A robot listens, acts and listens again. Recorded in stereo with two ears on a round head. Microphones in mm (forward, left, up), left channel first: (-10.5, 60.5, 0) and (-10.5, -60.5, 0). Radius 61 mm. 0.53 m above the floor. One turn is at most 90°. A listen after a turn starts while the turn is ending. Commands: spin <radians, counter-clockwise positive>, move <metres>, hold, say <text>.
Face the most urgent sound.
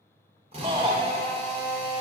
spin -0.70
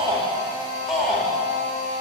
say Found it: a shout, straight ahead, 1 to 2 m away.